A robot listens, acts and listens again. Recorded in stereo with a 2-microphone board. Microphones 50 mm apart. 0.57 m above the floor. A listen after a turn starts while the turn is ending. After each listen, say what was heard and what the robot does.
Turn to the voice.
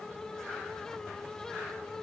Keep listening.
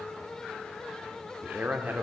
The man speaking: about 40° right or 140° right. Turn 40° right.
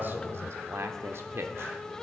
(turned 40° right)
So it is at 90° right. Turn 90° right.
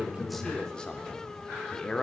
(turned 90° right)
The man speaking is now 25° left. Turn 25° left.
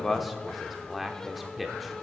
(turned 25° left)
Facing the man speaking.